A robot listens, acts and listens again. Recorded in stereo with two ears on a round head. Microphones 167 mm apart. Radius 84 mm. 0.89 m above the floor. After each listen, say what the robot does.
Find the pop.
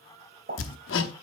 Turn 50° right.
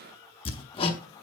Keep listening.
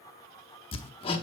I heard a pop, but can't make it out now. It was about straight ahead or 80° right.